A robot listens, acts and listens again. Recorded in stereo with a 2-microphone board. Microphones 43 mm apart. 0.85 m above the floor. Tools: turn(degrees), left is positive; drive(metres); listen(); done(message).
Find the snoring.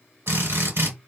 listen()
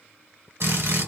listen()
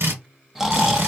turn(degrees=-30)
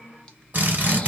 listen()
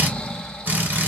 turn(degrees=20)
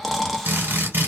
done("Facing the snoring, under 1 m away.")